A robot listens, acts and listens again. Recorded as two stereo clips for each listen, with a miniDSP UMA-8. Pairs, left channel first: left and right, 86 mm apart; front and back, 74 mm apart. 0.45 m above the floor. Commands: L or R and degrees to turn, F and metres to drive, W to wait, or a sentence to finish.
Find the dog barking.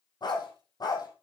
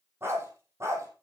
L130
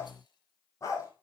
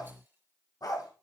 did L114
L35
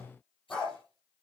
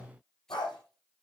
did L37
L10
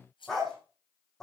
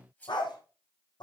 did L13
Found it: a dog barking, straight ahead, over 4 m away.